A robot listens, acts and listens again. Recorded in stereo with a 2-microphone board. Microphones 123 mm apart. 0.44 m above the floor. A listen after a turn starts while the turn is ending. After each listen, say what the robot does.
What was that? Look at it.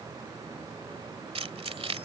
Turn 55° right.
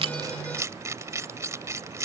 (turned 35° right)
Turn 30° right.
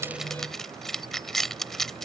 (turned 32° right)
Facing the keys jangling.